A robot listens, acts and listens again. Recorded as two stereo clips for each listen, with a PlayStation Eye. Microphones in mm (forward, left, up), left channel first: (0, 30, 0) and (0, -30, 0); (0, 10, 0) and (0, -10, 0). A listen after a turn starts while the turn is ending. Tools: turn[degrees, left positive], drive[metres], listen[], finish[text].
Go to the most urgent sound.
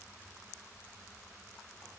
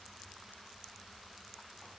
Action: listen[]
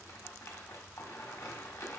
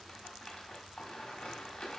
Action: listen[]
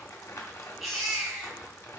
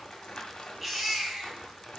Action: turn[30]
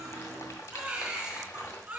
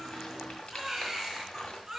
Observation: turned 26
Thought: So it is at 20° right.
Action: turn[-20]
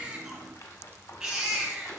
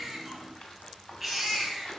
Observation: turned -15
Action: drive[1.0]
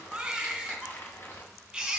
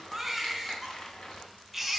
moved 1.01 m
Thought: The baby crying is now 10° right.
Action: turn[-10]
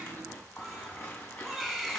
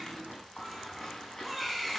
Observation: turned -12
Action: drive[1.0]
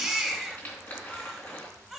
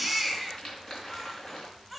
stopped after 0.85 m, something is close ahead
Action: finish[Arrived at the baby crying, straight ahead.]